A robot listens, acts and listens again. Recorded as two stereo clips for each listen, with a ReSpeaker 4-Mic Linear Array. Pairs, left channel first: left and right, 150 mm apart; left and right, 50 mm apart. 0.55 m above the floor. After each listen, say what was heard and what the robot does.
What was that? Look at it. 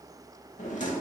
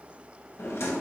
The drawer: about 55° left or 125° left. Turn 55° left.
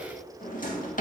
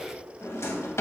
So it is at 65° left. Turn 65° left.
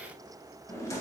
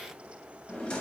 The drawer is now 20° left. Turn 20° left.
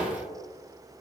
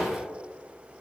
Found it: a drawer, straight ahead, under 1 m away.